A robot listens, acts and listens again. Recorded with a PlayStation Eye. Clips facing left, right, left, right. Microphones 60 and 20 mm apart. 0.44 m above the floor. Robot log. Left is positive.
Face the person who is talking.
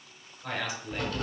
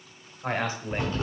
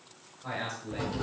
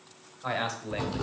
note: The man speaking: about 40° right or 140° right.
cmd yaw -40
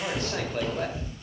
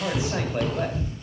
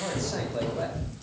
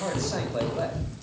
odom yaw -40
note: So it is at 10° right.
cmd yaw -10
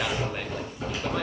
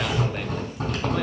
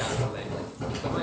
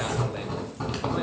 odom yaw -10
cmd idle
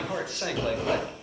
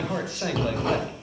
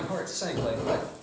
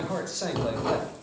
end: Found it: a man speaking, straight ahead, 1 to 2 m away.